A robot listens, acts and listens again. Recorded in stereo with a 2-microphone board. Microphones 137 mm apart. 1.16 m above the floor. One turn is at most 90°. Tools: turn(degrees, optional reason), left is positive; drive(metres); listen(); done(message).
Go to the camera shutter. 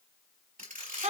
turn(degrees=-90)
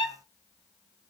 listen()
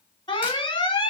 listen()
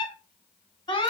done("Facing where the camera shutter came from. I can't hear it now. I did not reach it.")